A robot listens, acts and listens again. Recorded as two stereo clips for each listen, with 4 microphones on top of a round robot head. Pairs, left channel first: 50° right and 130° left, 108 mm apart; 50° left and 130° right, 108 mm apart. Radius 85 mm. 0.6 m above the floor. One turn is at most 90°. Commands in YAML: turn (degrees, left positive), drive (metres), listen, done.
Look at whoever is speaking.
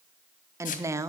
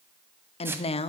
turn: 70
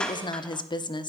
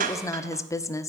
turn: -10
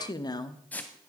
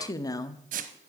done: "Found it: a woman speaking, straight ahead."